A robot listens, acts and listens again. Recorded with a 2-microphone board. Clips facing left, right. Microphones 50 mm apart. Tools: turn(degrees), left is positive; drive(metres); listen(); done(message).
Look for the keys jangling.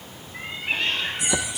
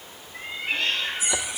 turn(degrees=90)
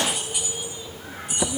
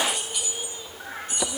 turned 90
turn(degrees=15)
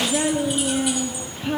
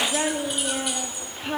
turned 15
listen()
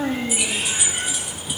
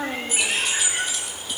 turn(degrees=10)
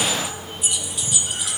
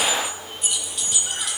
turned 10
done("Facing the keys jangling, 2 to 4 m away.")